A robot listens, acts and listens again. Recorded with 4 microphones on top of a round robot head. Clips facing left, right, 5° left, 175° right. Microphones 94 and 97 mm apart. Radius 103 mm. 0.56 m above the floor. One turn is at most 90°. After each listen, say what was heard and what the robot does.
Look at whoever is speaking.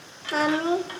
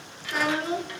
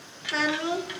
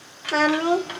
The child speaking: 140° left. Turn 90° left.
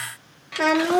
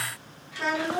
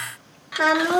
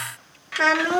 The child speaking is now 80° left. Turn 80° left.
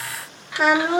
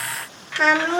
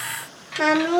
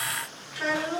The child speaking is now 10° left. Turn 10° left.
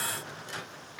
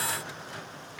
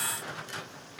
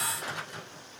Keep listening.
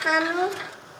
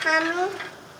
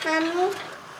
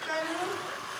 Facing the child speaking, under 1 m away.